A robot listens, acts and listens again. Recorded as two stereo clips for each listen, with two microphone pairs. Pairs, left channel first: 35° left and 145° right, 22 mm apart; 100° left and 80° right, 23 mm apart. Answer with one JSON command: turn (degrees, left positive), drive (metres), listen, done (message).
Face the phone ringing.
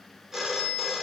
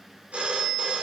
{"turn": -70}
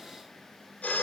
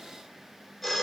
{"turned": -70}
{"turn": 20}
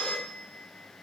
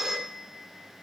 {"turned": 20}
{"done": "Found it: a phone ringing, straight ahead."}